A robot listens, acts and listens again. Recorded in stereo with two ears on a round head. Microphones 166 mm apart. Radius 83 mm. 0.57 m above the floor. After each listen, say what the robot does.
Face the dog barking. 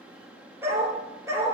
Turn 15° right.
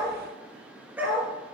Turn 30° right.
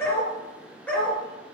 Facing the dog barking, 2 to 4 m away.